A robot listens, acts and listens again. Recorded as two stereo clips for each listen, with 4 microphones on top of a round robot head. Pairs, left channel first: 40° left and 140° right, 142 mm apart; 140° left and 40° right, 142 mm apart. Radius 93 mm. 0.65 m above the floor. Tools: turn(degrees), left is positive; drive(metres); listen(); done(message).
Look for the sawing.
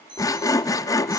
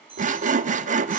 turn(degrees=-25)
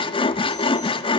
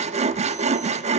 turn(degrees=-10)
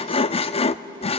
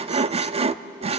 done("Found it: sawing, straight ahead.")